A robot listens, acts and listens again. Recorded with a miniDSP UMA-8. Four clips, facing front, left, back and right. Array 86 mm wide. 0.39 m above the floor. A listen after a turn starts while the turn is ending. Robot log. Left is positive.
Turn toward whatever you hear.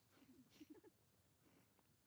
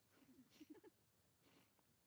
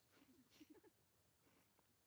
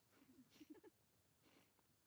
cmd idle
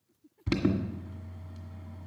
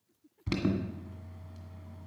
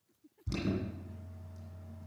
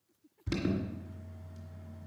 note: The alarm: 30° left.
cmd yaw +30
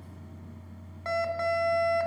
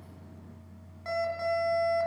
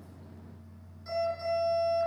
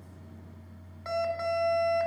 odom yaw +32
end: Facing the alarm, 1 to 2 m away.